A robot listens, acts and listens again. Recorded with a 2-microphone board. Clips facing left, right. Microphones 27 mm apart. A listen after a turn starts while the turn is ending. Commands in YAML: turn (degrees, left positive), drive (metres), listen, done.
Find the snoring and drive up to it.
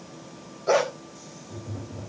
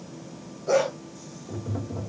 listen: true
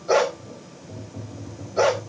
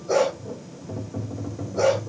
listen: true
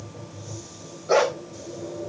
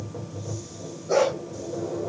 done: "I can't make out snoring, only tapping and a dog barking."